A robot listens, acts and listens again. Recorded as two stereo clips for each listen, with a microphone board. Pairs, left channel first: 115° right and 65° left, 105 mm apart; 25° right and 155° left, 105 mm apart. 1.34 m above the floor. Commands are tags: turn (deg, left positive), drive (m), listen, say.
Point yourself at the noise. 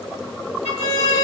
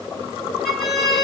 <turn deg="70"/>
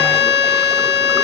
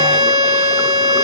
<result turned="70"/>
<turn deg="-30"/>
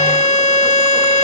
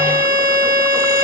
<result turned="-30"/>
<say>Found it: a violin, straight ahead.</say>